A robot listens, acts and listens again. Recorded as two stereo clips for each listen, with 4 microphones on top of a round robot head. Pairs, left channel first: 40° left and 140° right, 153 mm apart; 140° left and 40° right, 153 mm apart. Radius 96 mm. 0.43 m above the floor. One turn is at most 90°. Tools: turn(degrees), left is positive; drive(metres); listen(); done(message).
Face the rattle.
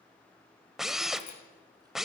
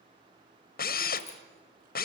listen()
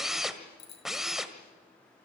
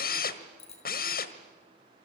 listen()
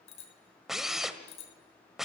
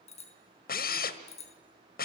done("I can't make out a rattle, only a bicycle bell and a drill.")